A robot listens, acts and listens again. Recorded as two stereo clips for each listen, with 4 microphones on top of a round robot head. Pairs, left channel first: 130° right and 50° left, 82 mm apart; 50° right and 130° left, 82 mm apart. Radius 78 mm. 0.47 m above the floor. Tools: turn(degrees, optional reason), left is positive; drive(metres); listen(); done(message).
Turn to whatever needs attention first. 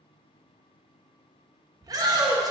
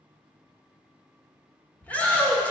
turn(degrees=20, reason="The shout: 20° left.")
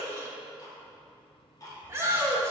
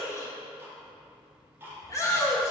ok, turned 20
done("Found it: a shout, straight ahead, 1 to 2 m away.")